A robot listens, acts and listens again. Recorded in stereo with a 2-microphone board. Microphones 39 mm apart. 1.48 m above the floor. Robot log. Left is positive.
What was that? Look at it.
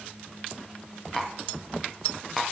cmd yaw +30
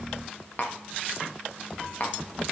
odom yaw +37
note: So it is at 130° left.
cmd yaw +130
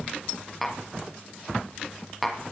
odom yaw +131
end: Found it: tapping, straight ahead.